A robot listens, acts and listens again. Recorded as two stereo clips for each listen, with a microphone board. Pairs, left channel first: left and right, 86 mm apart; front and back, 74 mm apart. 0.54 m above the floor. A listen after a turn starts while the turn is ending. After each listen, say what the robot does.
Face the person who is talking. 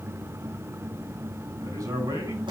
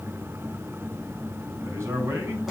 Turn 130° right.
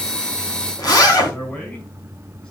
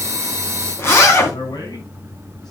Turn 15° left.
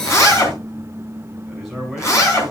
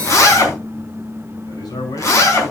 Facing the man speaking.